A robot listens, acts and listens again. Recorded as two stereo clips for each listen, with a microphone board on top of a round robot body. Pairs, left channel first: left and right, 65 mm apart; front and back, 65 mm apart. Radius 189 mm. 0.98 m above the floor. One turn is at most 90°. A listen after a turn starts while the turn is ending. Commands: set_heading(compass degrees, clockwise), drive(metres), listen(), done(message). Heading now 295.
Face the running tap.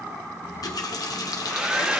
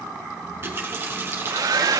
set_heading(205)
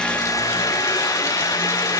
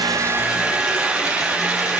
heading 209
set_heading(174)
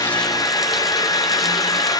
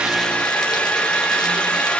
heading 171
listen()
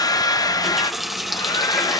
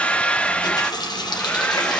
done("Found it: a running tap, straight ahead.")